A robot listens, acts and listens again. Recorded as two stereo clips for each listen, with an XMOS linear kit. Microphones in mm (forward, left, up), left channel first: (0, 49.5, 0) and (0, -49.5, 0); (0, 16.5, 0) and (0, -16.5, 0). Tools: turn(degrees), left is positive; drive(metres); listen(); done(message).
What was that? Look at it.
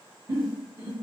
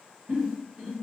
turn(degrees=-45)
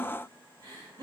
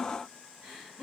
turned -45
turn(degrees=-80)
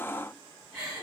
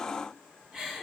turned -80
turn(degrees=-20)
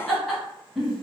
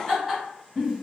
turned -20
done("Found it: a giggle, straight ahead, 1 to 2 m away.")